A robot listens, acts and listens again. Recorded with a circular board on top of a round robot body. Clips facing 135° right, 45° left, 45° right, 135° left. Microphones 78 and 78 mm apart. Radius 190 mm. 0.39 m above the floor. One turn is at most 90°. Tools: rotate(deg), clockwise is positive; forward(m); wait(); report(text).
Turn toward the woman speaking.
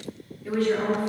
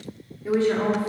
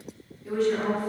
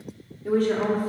rotate(-90)
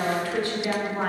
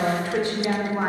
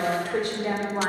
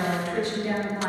rotate(30)
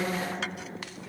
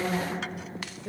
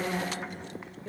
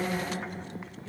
report("Found it: a woman speaking, straight ahead, 2 to 4 m away.")